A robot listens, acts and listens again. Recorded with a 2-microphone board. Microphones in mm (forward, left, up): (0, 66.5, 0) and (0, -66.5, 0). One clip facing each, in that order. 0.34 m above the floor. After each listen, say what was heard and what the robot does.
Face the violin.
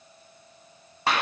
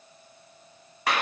Keep listening.
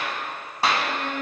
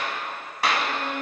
Turn 90° left.
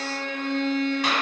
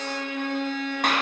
So it is at 10° right. Turn 10° right.
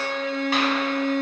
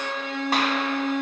Facing the violin.